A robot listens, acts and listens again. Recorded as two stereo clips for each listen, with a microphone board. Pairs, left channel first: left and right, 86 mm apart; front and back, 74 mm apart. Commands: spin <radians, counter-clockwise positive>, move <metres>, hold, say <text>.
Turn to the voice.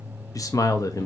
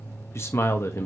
spin 0.79
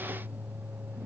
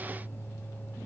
hold
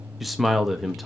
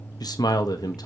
say Found it: a man speaking, straight ahead, under 1 m away.